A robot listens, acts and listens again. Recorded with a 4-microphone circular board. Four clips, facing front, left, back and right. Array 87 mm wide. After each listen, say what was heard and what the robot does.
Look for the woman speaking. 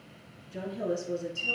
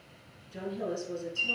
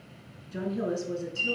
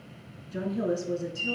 The woman speaking: 135° right. Turn 135° right.
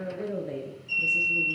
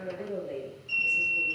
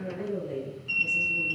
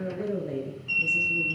The woman speaking is now 55° right. Turn 55° right.
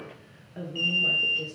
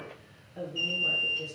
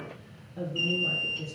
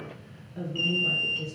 The woman speaking is now 10° right. Turn 10° right.
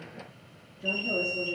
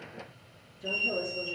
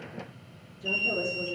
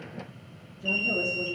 Found it: a woman speaking, straight ahead.